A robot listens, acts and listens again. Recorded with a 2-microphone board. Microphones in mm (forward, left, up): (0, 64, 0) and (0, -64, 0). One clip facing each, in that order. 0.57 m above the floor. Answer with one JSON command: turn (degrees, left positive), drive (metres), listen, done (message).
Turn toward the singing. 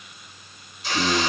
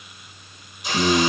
{"turn": -60}
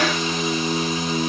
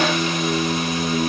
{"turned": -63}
{"turn": -50}
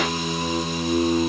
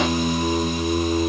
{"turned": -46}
{"done": "Facing the singing, 2 to 4 m away."}